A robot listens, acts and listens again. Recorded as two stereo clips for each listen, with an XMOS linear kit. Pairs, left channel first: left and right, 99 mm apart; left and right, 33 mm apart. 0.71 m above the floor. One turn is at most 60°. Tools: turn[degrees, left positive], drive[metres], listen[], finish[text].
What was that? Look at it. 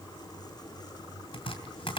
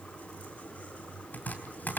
Thought: The chopping: about 60° left or 120° left.
Action: turn[60]
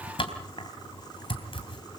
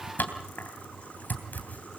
Thought: So it is at 60° left.
Action: turn[60]
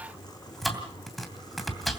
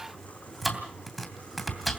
Action: finish[Facing the chopping.]